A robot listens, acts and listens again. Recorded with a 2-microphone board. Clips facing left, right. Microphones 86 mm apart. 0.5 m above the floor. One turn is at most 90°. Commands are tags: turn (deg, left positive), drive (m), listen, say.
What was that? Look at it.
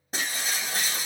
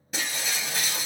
<turn deg="35"/>
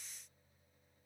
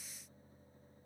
<listen/>
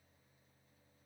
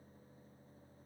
<say>I heard breaking glass, but can't make it out now. It was about straight ahead or 110° left.</say>